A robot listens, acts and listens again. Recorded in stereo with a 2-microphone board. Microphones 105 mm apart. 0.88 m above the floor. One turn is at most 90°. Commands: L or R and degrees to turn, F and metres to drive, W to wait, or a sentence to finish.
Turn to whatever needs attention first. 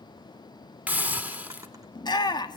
L40
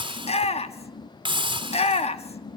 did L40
L90
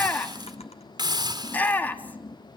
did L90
L15
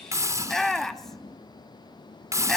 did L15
Facing the shout.